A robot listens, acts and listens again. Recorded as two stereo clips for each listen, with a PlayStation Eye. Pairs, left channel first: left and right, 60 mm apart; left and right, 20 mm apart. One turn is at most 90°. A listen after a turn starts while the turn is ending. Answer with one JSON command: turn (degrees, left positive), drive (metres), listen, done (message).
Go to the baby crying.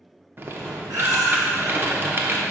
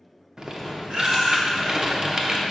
{"turn": -90}
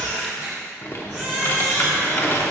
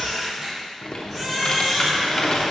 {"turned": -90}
{"turn": -10}
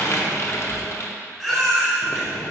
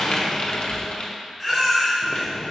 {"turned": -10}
{"drive": 1.0}
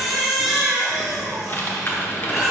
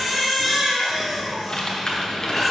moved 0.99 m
{"drive": 1.0}
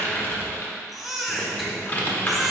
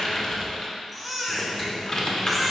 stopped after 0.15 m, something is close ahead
{"done": "Arrived at the baby crying, straight ahead."}